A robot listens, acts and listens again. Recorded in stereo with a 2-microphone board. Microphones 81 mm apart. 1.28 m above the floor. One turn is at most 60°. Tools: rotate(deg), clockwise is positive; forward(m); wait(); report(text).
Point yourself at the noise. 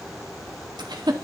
rotate(60)
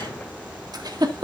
rotate(60)
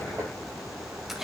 wait()
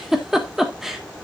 report("Facing the giggle, 1 to 2 m away.")